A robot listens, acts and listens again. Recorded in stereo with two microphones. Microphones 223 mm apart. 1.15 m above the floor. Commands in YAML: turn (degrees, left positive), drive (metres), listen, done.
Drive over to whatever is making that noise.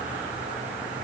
listen: true
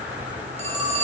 turn: -30
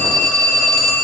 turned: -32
drive: 1.0
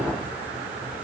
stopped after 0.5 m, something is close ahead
listen: true
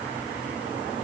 listen: true
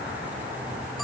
done: "Facing where the phone ringing came from. I can't hear it now. I did not reach it."